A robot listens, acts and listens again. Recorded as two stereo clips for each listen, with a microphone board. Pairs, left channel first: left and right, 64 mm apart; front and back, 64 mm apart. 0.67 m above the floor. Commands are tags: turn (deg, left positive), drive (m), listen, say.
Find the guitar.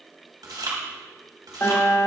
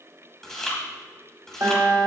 <turn deg="145"/>
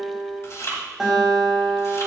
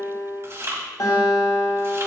<say>Facing the guitar.</say>